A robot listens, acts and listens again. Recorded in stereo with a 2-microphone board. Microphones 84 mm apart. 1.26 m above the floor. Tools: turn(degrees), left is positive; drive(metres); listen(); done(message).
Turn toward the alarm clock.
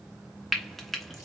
listen()
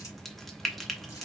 listen()
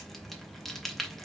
done("I can't make out an alarm clock, only frying.")